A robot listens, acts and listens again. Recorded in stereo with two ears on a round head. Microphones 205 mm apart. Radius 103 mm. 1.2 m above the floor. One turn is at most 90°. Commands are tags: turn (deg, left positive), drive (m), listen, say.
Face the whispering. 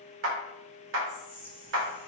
<turn deg="30"/>
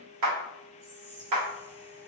<turn deg="-30"/>
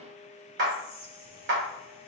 <turn deg="10"/>
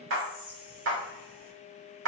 <say>Found it: whispering, straight ahead.</say>